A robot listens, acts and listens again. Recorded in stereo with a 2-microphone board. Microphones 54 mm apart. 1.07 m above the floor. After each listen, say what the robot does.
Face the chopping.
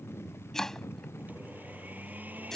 Turn 30° left.
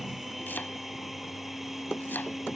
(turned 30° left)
Turn 140° left.
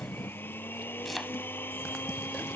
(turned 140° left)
Facing the chopping.